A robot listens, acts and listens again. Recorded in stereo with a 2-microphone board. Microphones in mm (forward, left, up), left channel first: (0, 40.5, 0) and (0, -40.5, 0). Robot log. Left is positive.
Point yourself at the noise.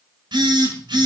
note: The phone buzzing: about 65° right or 115° right.
cmd yaw -65
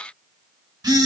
note: So it is at 50° right.
cmd yaw -50
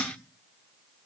cmd idle
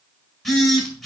end: Found it: a phone buzzing, straight ahead.